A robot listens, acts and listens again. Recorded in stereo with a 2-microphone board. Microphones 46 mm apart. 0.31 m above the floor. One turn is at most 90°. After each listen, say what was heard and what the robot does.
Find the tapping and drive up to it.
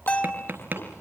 The tapping: about 40° right or 140° right. Turn 40° right.
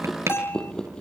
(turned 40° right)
So it is at 100° right. Turn 90° right.
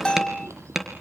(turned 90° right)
The tapping is now 10° right. Turn 10° right.
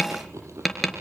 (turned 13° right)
Drive 1.0 m forward.
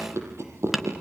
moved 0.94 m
Drive 1.0 m forward.
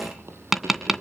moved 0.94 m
The tapping is now 10° right. Turn 10° right.
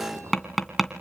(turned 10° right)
Drive 1.0 m forward.
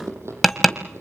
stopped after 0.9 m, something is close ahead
Arrived at the tapping, straight ahead.